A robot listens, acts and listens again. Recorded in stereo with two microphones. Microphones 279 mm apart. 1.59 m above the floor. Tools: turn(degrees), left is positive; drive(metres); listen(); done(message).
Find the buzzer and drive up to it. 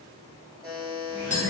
turn(degrees=-30)
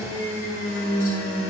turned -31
listen()
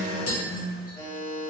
turn(degrees=25)
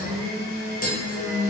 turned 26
listen()
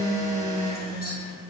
listen()
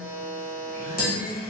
drive(metres=1.0)
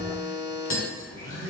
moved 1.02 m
drive(metres=1.0)
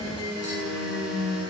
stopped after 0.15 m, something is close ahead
listen()
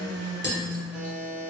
done("I am next to the buzzer.")